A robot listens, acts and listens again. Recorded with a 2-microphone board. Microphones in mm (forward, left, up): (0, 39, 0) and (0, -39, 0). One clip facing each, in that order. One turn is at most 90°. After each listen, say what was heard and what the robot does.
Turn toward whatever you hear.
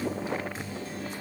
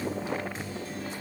Keep listening.
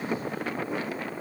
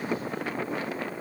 Keep listening.
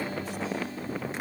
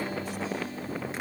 I can't make out anything to turn to.